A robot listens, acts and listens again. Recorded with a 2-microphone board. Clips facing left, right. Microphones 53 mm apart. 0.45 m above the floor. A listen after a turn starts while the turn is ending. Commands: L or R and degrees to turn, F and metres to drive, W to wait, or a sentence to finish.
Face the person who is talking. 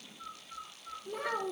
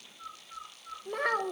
R60
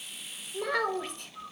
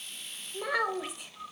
Found it: a child speaking, straight ahead, 1 to 2 m away.